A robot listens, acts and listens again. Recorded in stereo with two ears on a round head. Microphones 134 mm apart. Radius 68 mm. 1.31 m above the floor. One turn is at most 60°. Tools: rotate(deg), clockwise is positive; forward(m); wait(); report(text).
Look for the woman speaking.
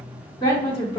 rotate(-30)
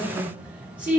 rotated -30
rotate(15)
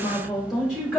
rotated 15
report("Found it: a woman speaking, straight ahead, 2 to 4 m away.")